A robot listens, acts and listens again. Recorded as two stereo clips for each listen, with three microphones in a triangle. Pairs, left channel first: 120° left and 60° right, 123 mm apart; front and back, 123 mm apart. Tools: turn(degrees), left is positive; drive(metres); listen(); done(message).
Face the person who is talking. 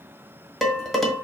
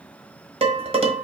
listen()
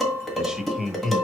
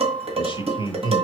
turn(degrees=35)
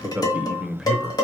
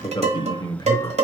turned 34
turn(degrees=30)
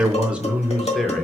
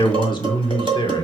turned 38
turn(degrees=35)
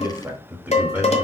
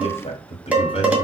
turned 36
turn(degrees=20)
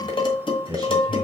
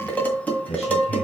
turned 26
done("Found it: a man speaking, straight ahead, 1 to 2 m away.")